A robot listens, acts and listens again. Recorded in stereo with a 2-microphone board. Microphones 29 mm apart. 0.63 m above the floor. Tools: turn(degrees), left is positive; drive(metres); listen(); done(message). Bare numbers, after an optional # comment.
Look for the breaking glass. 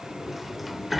listen()
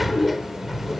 listen()
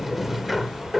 done("I can't make out breaking glass to turn to.")